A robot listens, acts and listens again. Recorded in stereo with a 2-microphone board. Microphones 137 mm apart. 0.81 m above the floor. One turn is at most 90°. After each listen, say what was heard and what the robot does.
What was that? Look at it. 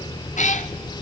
The cat meowing: about 60° left or 120° left. Turn 60° left.
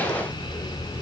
Keep listening.
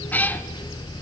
So it is at 15° left. Turn 15° left.
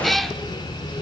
Facing the cat meowing, 1 to 2 m away.